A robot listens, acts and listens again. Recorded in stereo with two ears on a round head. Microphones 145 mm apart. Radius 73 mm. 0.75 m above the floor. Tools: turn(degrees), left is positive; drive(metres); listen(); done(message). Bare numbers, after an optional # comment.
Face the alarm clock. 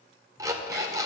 # The alarm clock: about 20° right or 160° right.
turn(-20)
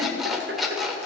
done("Found it: an alarm clock, straight ahead.")